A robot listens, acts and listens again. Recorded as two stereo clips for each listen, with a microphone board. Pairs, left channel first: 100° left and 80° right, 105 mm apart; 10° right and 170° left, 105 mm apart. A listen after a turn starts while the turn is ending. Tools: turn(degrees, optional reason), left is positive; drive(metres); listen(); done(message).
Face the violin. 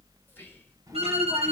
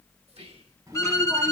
turn(degrees=-70, reason="The violin: 70° right.")
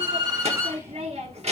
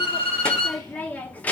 turn(degrees=-20, reason="The violin is now 20° right.")
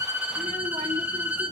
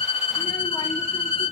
done("Facing the violin.")